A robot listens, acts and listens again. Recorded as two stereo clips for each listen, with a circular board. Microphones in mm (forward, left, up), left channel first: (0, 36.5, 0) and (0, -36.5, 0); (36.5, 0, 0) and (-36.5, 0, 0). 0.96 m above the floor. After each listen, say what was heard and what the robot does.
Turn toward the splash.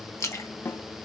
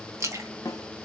The splash: 135° left. Turn 135° left.
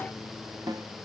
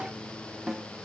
I heard a splash from this way, but can't make it out now.